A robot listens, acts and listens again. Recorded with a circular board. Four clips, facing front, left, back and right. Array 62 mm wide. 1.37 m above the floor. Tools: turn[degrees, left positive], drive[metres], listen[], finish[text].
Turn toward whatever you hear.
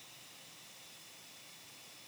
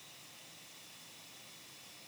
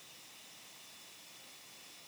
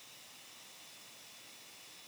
Action: listen[]
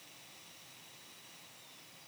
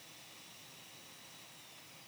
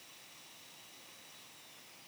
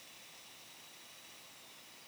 Action: listen[]
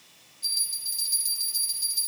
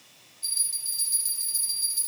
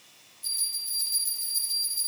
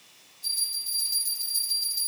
Thought: The bell: 20° left.
Action: turn[20]
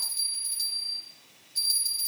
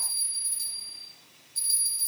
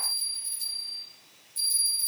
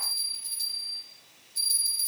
Action: finish[Facing the bell, over 4 m away.]